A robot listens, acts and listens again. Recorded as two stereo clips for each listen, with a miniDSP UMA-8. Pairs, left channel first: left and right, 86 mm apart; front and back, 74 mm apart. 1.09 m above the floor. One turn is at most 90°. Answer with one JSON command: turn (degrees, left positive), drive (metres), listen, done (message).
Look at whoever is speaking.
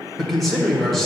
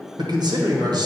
{"turn": 90}
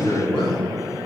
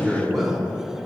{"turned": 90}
{"turn": 90}
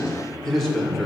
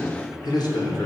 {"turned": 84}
{"done": "Facing the man speaking."}